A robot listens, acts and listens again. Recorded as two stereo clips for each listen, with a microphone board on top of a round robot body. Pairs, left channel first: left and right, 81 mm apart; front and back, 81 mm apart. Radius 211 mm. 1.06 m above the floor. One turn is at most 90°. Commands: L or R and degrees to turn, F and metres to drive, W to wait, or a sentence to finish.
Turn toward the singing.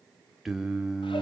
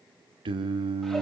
R90
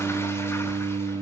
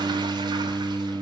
R85
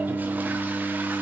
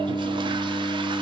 R15
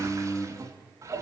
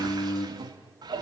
L15
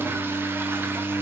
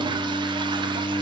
L15
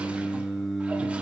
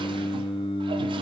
Found it: singing, straight ahead, 2 to 4 m away.